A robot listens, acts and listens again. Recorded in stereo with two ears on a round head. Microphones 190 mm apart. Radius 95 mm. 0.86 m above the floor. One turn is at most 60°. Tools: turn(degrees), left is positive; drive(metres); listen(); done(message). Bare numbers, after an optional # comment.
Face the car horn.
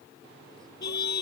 # The car horn: about 55° left or 125° left.
turn(55)
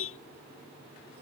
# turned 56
# So it is at 70° left.
turn(60)
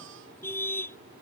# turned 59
# The car horn is now 10° left.
turn(10)
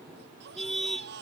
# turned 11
done("Found it: a car horn, straight ahead.")